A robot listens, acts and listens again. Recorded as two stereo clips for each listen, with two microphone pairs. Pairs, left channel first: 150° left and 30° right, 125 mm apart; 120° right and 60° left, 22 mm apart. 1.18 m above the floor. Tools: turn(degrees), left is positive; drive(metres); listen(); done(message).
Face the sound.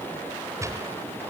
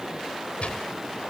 turn(degrees=-95)
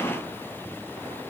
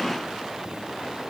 done("I heard a gunshot from this way, but can't make it out now.")